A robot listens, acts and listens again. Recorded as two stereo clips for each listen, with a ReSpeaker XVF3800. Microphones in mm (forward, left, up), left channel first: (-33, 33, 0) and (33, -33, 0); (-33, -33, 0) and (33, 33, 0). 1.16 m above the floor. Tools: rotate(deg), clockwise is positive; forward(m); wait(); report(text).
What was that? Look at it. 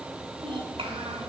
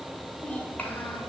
rotate(60)
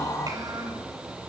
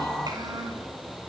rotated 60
report("Facing the child speaking.")